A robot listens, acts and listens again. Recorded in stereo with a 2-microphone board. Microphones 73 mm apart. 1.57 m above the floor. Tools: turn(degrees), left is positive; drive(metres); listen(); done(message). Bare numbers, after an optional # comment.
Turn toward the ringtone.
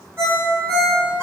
# The ringtone: about 40° right or 140° right.
turn(-40)
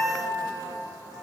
listen()
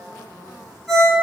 # So it is at 10° right.
turn(-10)
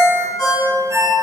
done("Found it: a ringtone, straight ahead, 1 to 2 m away.")